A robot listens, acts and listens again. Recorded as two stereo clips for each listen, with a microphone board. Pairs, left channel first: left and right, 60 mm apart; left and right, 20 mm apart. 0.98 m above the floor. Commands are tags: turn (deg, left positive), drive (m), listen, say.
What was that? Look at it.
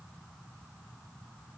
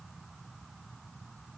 <listen/>
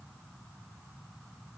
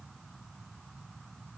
<listen/>
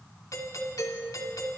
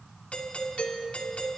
<turn deg="70"/>
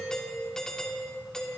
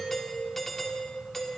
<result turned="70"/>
<turn deg="10"/>
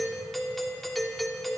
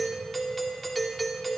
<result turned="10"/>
<say>Facing the doorbell, 2 to 4 m away.</say>